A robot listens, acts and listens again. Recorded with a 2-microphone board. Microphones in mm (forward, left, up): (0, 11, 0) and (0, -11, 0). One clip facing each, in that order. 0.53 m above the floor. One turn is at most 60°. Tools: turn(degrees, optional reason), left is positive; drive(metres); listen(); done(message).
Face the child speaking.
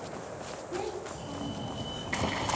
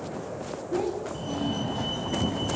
turn(degrees=30)
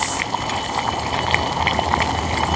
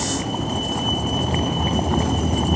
listen()
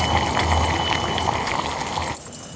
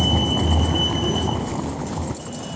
listen()
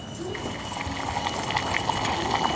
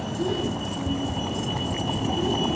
done("Facing the child speaking, over 4 m away.")